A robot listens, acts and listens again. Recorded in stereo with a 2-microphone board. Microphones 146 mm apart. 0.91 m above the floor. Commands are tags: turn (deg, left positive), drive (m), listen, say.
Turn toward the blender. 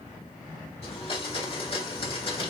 <turn deg="40"/>
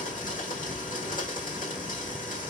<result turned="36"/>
<turn deg="100"/>
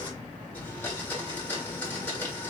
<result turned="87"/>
<turn deg="10"/>
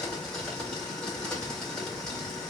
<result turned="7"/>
<say>Found it: a blender, straight ahead, 1 to 2 m away.</say>